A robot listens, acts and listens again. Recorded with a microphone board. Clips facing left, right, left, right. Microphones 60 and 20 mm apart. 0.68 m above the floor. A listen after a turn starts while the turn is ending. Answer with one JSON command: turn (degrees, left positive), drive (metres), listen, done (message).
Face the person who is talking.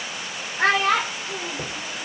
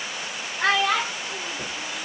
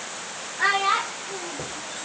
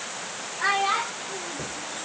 {"turn": 40}
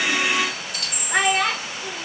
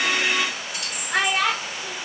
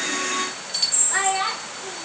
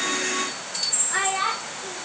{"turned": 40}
{"turn": 10}
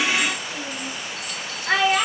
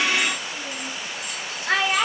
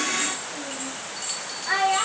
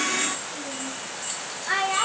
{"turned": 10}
{"done": "Facing the child speaking, under 1 m away."}